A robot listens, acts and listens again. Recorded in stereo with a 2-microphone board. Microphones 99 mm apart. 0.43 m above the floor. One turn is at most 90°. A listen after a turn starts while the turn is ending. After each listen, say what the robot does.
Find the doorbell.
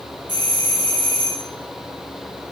Turn 60° right.
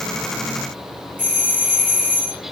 Turn 20° right.
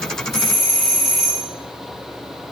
Found it: a doorbell, straight ahead.